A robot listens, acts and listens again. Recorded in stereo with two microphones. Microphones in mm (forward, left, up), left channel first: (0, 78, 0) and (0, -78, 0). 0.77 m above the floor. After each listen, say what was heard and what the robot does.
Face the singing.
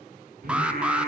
The singing: about 70° right or 110° right. Turn 70° right.
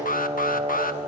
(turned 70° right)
So it is at 45° right. Turn 45° right.
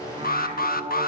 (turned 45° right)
The singing is now 40° right. Turn 40° right.
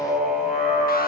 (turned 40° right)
Found it: singing, straight ahead.